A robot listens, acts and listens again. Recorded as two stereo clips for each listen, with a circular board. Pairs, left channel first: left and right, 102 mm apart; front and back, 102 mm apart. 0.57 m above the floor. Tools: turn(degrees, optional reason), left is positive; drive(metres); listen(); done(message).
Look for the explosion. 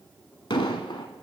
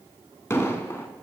turn(degrees=60, reason="The explosion: 60° left.")
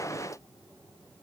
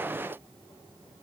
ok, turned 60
done("Facing where the explosion came from. I can't hear it now.")